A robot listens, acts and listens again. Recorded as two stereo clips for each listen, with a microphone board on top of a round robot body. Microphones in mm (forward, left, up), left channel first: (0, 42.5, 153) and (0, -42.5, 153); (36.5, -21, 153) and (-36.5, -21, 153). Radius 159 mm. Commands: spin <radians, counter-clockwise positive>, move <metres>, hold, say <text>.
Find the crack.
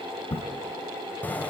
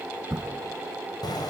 spin 1.48
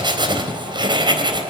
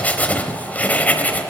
say Facing where the crack came from. I can't hear it now.